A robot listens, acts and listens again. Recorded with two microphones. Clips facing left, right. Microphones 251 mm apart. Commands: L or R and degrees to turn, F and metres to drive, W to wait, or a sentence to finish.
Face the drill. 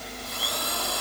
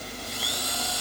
L65
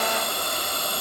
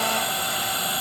L45
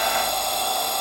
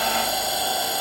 Facing the drill.